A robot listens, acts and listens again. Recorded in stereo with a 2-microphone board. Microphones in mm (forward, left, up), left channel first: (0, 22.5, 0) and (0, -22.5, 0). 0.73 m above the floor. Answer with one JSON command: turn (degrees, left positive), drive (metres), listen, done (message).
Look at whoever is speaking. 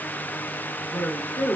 {"turn": 60}
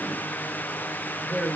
{"done": "Found it: a woman speaking, straight ahead."}